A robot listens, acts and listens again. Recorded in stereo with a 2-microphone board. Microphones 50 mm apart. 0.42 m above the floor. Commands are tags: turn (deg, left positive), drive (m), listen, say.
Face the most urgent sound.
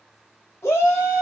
<turn deg="55"/>
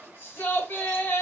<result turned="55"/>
<turn deg="55"/>
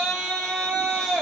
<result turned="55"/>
<say>Facing the shout, 1 to 2 m away.</say>